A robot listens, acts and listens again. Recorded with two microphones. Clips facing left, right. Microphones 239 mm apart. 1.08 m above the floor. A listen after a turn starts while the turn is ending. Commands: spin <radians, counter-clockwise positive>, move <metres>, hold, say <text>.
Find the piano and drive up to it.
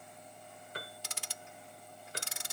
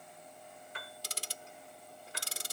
spin 0.70
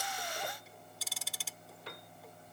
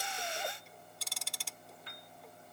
spin 1.75
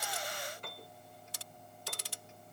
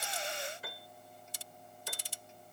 move 1.0
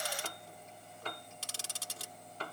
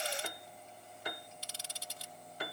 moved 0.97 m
spin -0.26
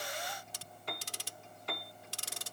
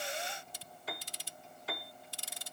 move 1.0
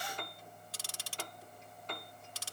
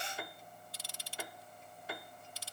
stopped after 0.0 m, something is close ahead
spin -0.17
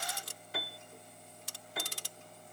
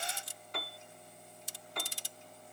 say I am next to the piano.